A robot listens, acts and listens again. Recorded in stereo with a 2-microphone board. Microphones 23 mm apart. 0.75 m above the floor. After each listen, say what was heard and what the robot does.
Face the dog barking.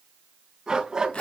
The dog barking: about 25° right or 155° right. Turn 25° right.
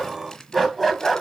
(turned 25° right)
So it is at 15° left. Turn 15° left.
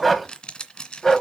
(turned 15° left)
The dog barking is now 25° left. Turn 25° left.
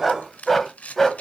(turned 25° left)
The dog barking is now 15° left. Turn 15° left.
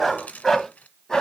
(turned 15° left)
The dog barking is now 15° left. Turn 15° left.
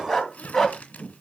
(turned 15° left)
Found it: a dog barking, straight ahead, 2 to 4 m away.